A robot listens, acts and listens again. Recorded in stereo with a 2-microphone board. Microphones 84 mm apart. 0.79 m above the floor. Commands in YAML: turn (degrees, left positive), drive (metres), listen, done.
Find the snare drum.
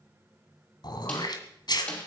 turn: 15
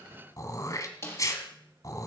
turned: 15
turn: 150
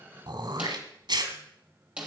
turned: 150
turn: -15
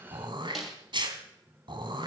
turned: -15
done: "Facing the snare drum."